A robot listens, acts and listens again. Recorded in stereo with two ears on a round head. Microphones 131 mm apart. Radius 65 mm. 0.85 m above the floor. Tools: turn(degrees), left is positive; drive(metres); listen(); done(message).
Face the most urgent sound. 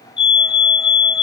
turn(degrees=35)
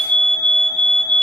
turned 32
done("Facing the fire alarm, over 4 m away.")